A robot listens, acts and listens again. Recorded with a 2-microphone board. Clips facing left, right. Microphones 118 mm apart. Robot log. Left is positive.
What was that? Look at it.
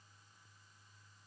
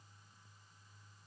cmd idle
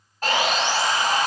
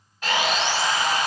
note: The sawing: about 45° left or 135° left.
cmd yaw +45
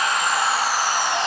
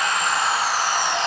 end: Facing the sawing, under 1 m away.